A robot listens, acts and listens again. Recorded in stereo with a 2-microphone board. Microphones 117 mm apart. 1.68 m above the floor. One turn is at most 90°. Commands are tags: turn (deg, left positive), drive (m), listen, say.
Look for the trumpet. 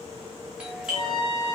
<turn deg="45"/>
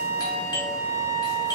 <turn deg="90"/>
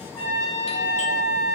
<say>Facing the trumpet, 1 to 2 m away.</say>